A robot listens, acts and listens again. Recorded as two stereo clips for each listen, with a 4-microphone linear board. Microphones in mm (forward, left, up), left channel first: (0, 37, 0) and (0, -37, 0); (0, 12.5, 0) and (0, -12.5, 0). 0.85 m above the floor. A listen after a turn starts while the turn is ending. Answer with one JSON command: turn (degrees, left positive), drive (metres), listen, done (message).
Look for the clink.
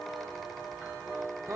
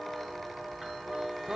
{"listen": true}
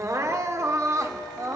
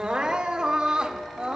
{"listen": true}
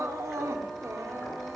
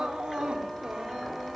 {"done": "I can't make out a clink, only crying."}